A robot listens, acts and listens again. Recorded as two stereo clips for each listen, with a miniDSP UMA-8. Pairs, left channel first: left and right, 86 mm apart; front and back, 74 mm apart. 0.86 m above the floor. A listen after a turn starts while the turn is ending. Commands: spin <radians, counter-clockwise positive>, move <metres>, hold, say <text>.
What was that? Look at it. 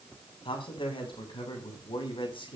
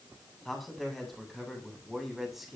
spin 1.57
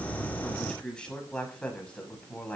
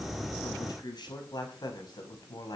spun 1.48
spin 0.26
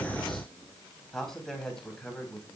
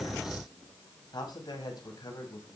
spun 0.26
spin 0.17
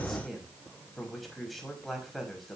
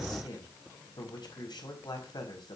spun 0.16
say Found it: a man speaking, straight ahead.